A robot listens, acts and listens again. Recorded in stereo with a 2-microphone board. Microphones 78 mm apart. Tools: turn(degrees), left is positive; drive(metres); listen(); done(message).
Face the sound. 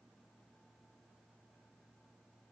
listen()
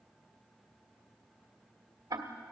turn(degrees=-60)
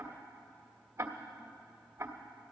turn(degrees=-40)
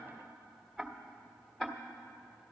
done("Found it: ticking, straight ahead, 1 to 2 m away.")